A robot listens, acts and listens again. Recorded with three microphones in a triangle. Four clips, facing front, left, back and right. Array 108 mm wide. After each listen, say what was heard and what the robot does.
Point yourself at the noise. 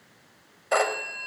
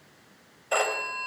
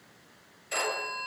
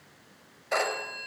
The phone ringing: 10° left. Turn 10° left.
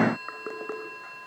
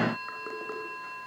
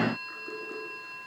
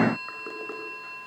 Keep listening.
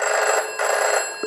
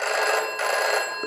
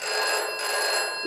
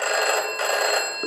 Facing the phone ringing.